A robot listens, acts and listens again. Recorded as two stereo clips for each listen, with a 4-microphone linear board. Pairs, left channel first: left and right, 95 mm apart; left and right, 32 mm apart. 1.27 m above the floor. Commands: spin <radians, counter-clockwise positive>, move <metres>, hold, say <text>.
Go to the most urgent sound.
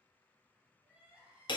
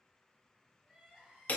spin -0.26
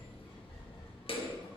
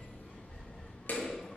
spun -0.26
hold
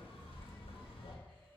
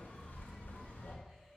hold
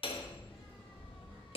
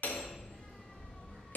say I heard crying, but can't make it out now. It was about straight ahead or 150° right. I did not reach it.